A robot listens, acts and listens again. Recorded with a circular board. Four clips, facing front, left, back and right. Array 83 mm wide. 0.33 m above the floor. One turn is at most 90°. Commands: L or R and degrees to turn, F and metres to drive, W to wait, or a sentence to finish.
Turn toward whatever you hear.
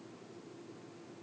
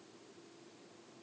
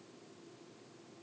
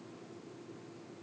W
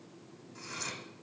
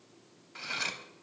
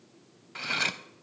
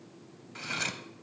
R90
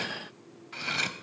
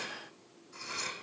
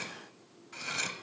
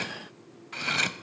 R70
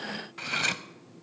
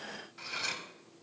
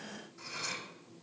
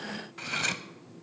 R25
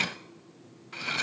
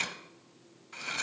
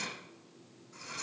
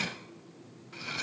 L10
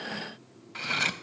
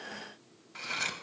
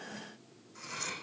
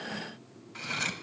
Found it: cutlery clinking, straight ahead, under 1 m away.